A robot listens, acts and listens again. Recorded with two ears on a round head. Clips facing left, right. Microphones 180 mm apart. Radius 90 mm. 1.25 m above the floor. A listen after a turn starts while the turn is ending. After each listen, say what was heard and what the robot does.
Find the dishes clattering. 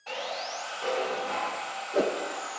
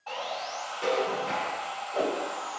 The dishes clattering: about 20° right or 160° right. Turn 20° right.
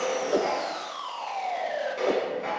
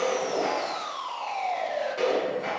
Found it: dishes clattering, straight ahead.